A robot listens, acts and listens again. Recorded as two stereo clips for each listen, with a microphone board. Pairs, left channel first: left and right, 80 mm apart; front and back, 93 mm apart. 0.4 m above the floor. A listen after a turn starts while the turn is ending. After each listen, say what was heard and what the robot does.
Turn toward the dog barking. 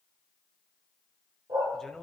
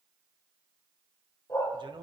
The dog barking: 55° right. Turn 55° right.
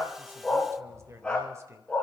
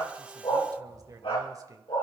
The dog barking is now 20° left. Turn 20° left.
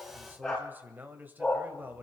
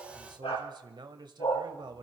The dog barking is now 15° left. Turn 15° left.
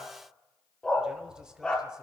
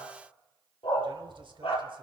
The dog barking is now 10° left. Turn 10° left.
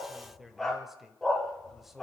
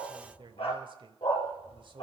Facing the dog barking.